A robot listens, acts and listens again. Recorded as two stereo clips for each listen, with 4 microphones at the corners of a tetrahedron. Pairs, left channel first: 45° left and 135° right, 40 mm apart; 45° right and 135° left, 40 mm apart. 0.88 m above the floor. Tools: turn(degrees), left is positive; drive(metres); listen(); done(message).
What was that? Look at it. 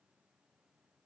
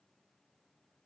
listen()
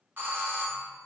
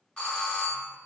turn(degrees=-110)
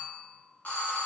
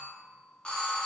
turn(degrees=15)
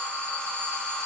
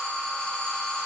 done("Facing the doorbell, 1 to 2 m away.")